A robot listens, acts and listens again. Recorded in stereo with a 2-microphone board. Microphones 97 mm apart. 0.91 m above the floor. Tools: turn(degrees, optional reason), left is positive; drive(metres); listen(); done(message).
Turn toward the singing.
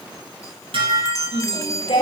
turn(degrees=90)
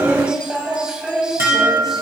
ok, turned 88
done("Facing the singing, over 4 m away.")